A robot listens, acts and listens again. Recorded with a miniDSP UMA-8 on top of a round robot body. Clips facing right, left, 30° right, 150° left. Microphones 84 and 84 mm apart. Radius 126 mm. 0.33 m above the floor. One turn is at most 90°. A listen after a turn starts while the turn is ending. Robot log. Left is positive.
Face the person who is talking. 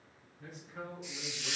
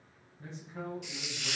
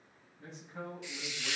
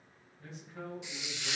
note: The man speaking: 30° left.
cmd yaw +30
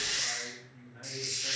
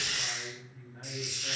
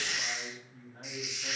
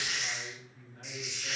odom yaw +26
end: Facing the man speaking.